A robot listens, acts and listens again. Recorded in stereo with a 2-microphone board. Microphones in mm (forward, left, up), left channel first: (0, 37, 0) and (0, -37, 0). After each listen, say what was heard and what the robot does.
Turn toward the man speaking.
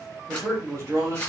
The man speaking: about 40° right or 140° right. Turn 40° right.
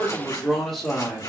So it is at 15° left. Turn 15° left.
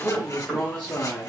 The man speaking is now 25° left. Turn 25° left.
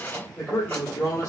The man speaking is now 30° left. Turn 30° left.
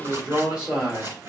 The man speaking is now 20° right. Turn 20° right.
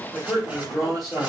Facing the man speaking, 1 to 2 m away.